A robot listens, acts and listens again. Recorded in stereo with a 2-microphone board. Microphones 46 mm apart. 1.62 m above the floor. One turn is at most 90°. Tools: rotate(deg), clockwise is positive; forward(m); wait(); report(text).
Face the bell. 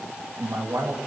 wait()
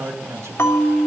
rotate(-65)
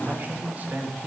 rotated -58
wait()
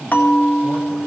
rotate(-45)
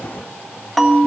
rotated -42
report("Found it: a bell, straight ahead.")